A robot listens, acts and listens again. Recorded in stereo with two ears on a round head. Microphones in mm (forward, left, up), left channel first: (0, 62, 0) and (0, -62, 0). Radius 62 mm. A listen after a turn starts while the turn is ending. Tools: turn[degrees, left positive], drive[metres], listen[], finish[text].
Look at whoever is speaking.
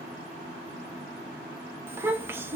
Thought: The child speaking: about 15° right or 165° right.
Action: turn[-15]
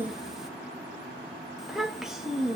Action: finish[Facing the child speaking, under 1 m away.]